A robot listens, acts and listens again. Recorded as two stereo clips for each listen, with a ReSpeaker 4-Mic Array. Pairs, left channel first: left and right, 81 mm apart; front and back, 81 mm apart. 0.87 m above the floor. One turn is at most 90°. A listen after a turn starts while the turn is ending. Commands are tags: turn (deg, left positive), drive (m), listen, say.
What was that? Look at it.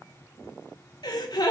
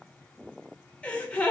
<turn deg="75"/>
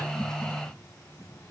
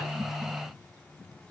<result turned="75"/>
<say>I heard a gasp from this way, but can't make it out now.</say>